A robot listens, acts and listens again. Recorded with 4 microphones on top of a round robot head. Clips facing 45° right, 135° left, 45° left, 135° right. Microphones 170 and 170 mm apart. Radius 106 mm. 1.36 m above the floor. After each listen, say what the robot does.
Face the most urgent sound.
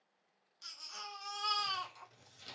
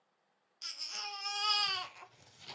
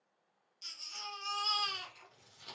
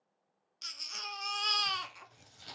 Turn 160° right.
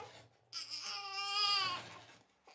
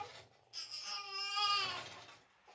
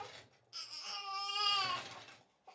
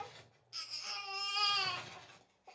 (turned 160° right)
Turn 55° right.
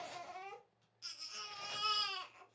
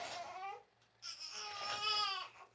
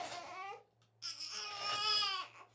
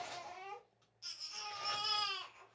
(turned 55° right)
Turn 10° left.
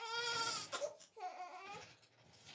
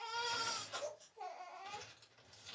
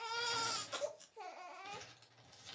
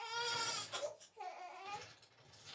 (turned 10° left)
Found it: a baby crying, straight ahead.